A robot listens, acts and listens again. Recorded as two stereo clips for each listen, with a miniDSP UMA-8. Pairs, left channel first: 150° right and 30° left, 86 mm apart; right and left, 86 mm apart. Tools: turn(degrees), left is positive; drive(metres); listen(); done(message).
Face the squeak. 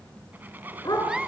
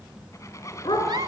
turn(degrees=-40)
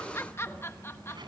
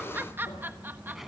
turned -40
listen()
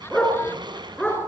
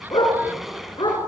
done("Found it: a squeak, straight ahead, 2 to 4 m away.")